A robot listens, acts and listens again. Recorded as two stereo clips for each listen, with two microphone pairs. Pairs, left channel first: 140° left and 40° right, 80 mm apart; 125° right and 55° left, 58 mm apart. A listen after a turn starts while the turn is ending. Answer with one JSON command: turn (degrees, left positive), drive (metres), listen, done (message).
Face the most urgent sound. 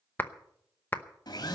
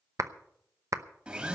{"listen": true}
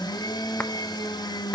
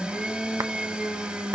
{"listen": true}
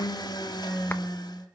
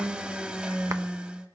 {"done": "I can't make out anything urgent to turn to."}